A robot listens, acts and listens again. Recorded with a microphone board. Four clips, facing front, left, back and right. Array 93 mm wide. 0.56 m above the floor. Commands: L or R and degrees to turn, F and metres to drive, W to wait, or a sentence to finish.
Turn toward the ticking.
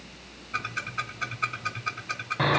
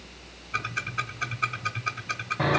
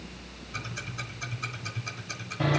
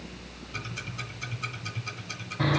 L50
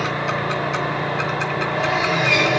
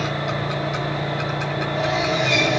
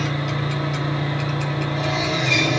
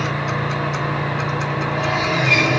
W
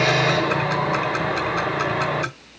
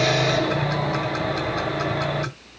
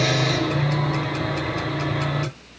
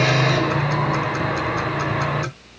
W
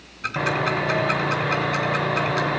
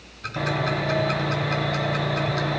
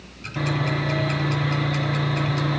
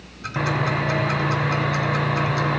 I heard ticking from this way, but can't make it out now.